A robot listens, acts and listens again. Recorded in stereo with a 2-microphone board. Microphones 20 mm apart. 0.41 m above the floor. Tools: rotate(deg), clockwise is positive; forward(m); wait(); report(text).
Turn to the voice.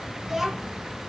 rotate(15)
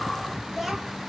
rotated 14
report("Facing the child speaking.")